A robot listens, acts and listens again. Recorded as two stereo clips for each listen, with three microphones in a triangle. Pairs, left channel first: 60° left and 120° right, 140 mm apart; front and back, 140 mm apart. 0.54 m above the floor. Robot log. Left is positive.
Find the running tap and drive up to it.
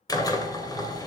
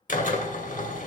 cmd idle
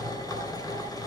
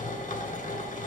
cmd idle
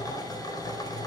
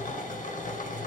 end: I can't make out a running tap, only a drill.